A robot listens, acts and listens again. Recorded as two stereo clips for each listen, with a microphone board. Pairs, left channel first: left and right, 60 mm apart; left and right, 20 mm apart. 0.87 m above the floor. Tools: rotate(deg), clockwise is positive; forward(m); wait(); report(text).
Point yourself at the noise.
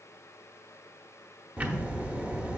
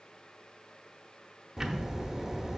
rotate(25)
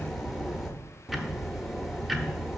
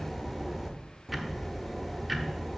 report("Facing the ticking, under 1 m away.")